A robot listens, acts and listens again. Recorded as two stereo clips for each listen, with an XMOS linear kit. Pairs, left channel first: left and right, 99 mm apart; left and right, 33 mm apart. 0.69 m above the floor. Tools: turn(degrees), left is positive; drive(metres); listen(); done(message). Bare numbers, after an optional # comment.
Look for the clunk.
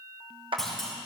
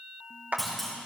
turn(30)
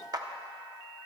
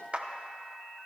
listen()
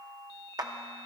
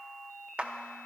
done("I heard a clunk, but can't make it out now. It was about 25° right or 145° left.")